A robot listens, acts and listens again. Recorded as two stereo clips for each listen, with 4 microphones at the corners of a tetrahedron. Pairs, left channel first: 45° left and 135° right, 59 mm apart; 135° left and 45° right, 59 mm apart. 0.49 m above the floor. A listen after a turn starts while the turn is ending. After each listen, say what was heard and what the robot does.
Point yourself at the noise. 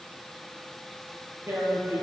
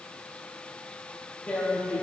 The tearing paper: 155° right. Turn 155° right.
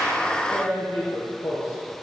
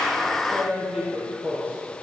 The tearing paper is now 25° left. Turn 25° left.
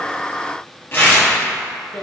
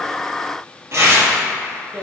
Facing the tearing paper.